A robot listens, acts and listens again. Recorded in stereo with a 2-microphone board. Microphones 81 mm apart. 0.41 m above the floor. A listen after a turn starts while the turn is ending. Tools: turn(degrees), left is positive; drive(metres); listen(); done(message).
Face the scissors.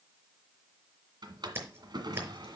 turn(degrees=-30)
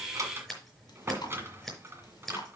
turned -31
done("Found it: scissors, straight ahead, over 4 m away.")